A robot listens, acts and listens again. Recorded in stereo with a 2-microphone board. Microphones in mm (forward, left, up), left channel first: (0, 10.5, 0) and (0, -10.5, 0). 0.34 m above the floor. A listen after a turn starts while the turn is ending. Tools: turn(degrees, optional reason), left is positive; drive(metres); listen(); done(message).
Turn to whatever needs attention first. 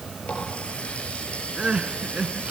turn(degrees=-60, reason="The crying: about 60° right or 120° right.")
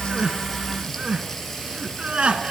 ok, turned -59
turn(degrees=-60, reason="So it is at 60° right.")
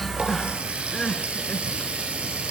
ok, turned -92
turn(degrees=35, reason="The crying is now 35° left.")
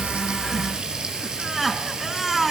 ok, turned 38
done("Found it: crying, straight ahead.")